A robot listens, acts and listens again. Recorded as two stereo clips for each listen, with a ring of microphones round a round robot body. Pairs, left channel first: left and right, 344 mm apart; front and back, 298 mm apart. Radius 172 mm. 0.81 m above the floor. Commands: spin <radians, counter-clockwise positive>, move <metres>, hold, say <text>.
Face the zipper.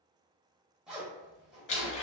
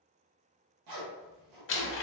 spin 3.14
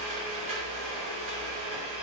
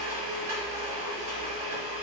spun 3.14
hold
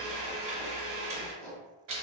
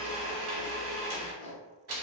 say Found it: a zipper, straight ahead.